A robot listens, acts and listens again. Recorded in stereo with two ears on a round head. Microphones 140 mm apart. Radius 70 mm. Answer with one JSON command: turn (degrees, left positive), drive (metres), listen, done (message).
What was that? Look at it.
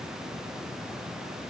{"listen": true}
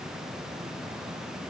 {"listen": true}
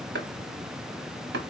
{"turn": -90}
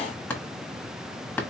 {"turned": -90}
{"turn": 10}
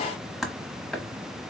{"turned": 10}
{"done": "Facing the chopping, 1 to 2 m away."}